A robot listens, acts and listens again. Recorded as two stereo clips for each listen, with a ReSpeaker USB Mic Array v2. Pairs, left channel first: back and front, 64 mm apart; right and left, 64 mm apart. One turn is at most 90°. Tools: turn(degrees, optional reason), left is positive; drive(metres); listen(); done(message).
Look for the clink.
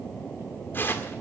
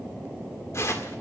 listen()
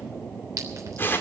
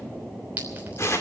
turn(degrees=25, reason="The clink: 25° left.")
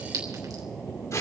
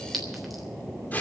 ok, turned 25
listen()
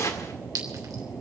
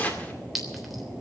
done("Found it: a clink, straight ahead.")